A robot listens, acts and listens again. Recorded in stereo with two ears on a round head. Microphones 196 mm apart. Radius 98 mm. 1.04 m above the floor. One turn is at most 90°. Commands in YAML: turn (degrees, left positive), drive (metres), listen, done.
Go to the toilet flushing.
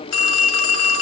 listen: true
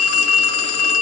listen: true
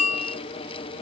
done: "I can't make out a toilet flushing to turn to."